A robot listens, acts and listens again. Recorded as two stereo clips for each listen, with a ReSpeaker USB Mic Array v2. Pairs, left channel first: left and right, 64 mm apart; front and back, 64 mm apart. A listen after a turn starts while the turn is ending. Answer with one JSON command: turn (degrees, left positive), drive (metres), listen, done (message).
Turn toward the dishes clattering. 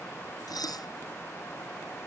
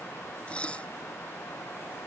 {"turn": 75}
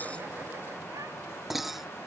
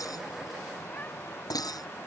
{"done": "Facing the dishes clattering."}